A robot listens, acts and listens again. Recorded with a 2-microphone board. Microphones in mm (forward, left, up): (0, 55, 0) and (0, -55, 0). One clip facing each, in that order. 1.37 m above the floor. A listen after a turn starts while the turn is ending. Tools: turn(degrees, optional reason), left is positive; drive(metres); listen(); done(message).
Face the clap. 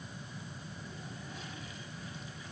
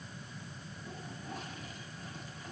listen()
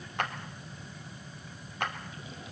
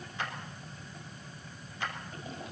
turn(degrees=60, reason="The clap: about 60° left or 120° left.")
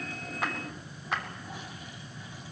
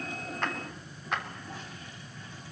done("Found it: a clap, straight ahead, 2 to 4 m away.")